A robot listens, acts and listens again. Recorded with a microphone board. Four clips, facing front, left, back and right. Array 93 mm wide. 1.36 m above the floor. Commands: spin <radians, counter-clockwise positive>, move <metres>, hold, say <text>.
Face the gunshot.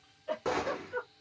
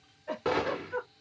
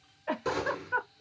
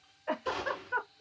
spin 1.13
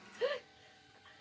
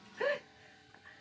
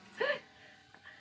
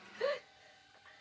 say Facing where the gunshot came from. I can't hear it now.